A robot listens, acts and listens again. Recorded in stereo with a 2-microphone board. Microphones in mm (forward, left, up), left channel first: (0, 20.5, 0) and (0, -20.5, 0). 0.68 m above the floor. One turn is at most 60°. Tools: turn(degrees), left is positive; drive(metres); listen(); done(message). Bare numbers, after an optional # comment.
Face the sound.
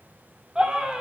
# The scream: about 20° right or 160° right.
turn(-20)
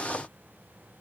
listen()
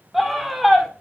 done("Facing the scream.")